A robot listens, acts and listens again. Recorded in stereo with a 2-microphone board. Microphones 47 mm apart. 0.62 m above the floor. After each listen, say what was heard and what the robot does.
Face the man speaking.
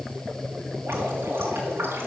Keep listening.
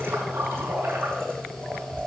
Keep listening.
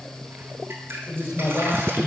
The man speaking: about 75° left or 105° left. Turn 75° left.
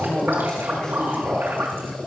So it is at 15° left. Turn 15° left.
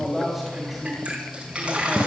Found it: a man speaking, straight ahead, 2 to 4 m away.